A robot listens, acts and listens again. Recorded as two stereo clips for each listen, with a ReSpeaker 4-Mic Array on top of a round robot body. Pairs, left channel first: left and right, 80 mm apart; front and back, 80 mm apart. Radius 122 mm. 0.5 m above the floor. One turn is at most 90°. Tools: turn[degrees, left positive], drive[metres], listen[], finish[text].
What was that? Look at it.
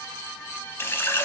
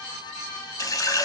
Thought: The running tap: 35° left.
Action: turn[35]
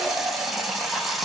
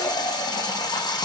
Action: finish[Found it: a running tap, straight ahead, under 1 m away.]